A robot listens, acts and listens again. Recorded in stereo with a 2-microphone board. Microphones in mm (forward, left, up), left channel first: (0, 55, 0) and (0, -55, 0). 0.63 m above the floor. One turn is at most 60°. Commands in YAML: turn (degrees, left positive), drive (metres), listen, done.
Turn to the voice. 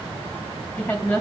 turn: 30
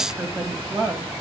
turn: -15
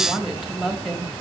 done: "Facing the woman speaking, 2 to 4 m away."